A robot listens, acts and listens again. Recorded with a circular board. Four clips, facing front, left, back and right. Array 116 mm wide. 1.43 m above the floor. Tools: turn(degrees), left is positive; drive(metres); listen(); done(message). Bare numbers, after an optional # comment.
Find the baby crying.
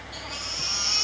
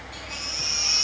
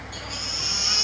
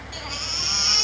# The baby crying: 80° right.
turn(-80)
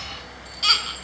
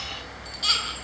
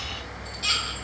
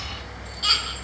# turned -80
done("Found it: a baby crying, straight ahead, over 4 m away.")